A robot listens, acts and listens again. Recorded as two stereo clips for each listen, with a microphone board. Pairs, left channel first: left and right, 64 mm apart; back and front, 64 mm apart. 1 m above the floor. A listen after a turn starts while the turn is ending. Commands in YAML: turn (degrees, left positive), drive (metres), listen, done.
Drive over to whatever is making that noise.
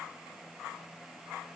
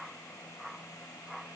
listen: true
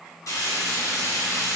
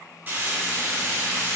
turn: 60
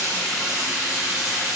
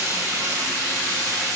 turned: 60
turn: -15
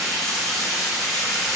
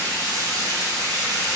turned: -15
drive: 1.0
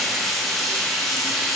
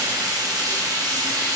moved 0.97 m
drive: 1.0
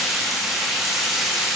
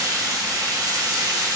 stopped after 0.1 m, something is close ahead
done: "I am next to the frying."